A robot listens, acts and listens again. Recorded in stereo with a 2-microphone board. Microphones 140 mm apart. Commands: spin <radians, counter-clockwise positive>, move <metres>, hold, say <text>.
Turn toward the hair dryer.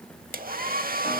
spin -1.57
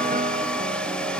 hold
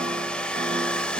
say Found it: a hair dryer, straight ahead.